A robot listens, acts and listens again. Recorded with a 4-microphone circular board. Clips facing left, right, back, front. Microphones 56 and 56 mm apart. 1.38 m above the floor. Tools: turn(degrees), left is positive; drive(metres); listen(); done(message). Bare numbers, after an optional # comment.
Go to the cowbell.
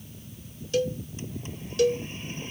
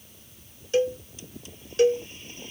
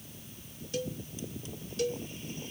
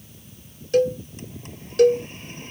# The cowbell: 30° right.
turn(-30)
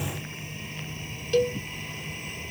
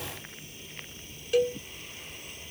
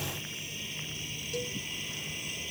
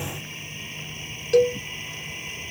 # The cowbell is now 10° right.
turn(-10)
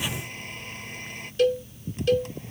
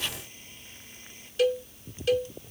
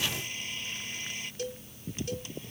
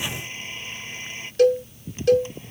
drive(1.0)
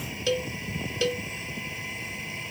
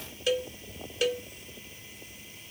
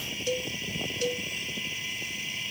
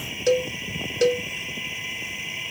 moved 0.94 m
# The cowbell is now 10° right.
turn(-10)
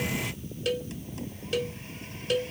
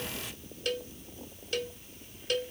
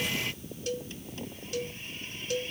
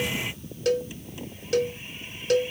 drive(1.0)
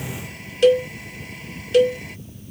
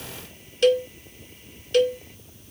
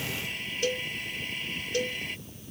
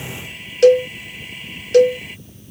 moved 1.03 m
drive(1.0)
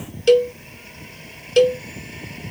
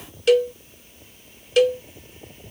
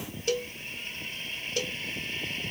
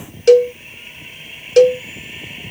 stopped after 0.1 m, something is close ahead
done("Arrived at the cowbell, straight ahead.")